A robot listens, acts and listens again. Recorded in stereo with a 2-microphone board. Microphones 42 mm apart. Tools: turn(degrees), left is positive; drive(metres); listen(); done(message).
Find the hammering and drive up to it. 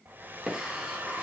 turn(degrees=-20)
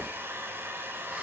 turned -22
listen()
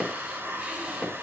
drive(metres=1.0)
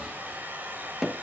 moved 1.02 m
turn(degrees=-10)
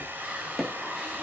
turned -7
drive(metres=1.0)
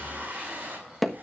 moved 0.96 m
drive(metres=1.0)
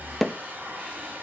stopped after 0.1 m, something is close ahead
done("I am next to the hammering.")